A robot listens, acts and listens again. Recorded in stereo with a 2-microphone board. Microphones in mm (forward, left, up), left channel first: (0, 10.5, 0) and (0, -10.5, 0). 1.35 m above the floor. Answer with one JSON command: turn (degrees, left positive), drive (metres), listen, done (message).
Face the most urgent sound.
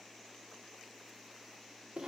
{"listen": true}
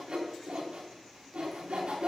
{"listen": true}
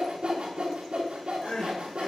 {"turn": 70}
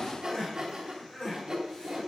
{"turn": 35}
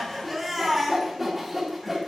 {"done": "Facing the crying."}